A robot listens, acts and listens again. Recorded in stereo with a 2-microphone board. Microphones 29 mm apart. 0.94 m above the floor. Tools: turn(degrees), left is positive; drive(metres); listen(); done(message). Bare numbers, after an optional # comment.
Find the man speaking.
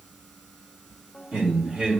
# The man speaking: about 50° right or 130° right.
turn(-50)
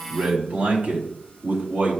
# So it is at 70° right.
turn(-70)
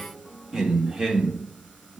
# The man speaking is now 30° right.
turn(-30)
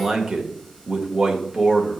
# The man speaking is now 25° right.
turn(-25)
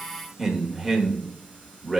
done("Found it: a man speaking, straight ahead.")